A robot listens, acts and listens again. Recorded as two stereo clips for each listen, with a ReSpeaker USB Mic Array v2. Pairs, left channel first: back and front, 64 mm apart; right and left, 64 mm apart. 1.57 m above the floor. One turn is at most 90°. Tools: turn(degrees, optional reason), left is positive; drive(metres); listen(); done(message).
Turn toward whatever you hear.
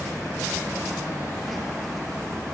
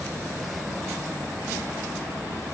listen()
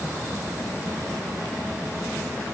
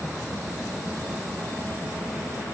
listen()
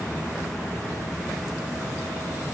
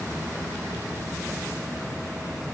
done("I can't make out anything to turn to.")